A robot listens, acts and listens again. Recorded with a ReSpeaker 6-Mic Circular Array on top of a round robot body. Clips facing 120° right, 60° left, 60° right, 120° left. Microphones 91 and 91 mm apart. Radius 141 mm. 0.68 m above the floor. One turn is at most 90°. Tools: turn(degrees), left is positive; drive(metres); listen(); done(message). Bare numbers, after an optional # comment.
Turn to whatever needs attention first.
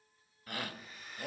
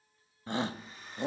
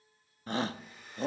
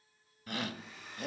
done("Facing the shout, under 1 m away.")